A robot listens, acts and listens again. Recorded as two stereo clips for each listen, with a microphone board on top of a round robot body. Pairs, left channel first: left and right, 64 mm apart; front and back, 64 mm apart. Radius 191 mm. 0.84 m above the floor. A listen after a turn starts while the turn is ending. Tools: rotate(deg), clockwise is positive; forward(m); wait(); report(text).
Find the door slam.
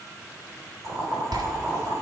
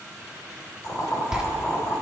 rotate(100)
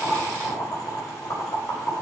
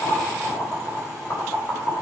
report("Facing where the door slam came from. I can't hear it now.")